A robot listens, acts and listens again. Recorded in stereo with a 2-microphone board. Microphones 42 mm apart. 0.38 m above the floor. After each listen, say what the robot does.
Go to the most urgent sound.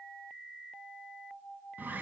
Keep listening.
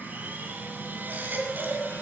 Turn 50° right.
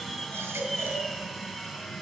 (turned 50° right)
Turn 75° right.
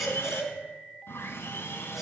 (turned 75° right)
Drive 1.0 m forward.
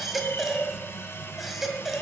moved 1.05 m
Drive 1.0 m forward.
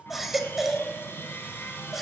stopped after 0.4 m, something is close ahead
I am next to the baby crying.